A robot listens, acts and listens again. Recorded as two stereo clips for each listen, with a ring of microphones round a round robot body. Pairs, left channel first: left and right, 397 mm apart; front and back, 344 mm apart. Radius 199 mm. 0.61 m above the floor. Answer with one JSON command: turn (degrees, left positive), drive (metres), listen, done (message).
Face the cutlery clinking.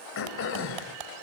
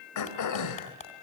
{"turn": -75}
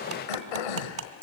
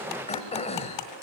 {"turn": -30}
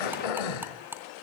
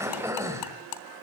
{"done": "Facing the cutlery clinking."}